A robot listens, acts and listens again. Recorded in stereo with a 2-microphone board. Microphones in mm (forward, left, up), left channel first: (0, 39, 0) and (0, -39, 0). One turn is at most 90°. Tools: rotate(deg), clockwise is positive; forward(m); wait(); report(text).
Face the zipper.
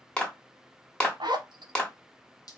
rotate(90)
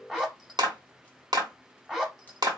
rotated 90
report("Facing the zipper, under 1 m away.")